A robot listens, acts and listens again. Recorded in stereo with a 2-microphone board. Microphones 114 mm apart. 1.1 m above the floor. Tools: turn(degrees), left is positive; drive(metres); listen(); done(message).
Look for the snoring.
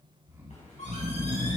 turn(degrees=-20)
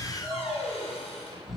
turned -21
done("Found it: snoring, straight ahead.")